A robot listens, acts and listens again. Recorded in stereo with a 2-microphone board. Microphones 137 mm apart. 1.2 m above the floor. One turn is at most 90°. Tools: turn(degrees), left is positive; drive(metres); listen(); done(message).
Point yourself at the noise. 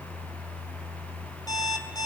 turn(degrees=30)
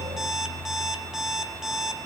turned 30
done("Facing the alarm clock, 2 to 4 m away.")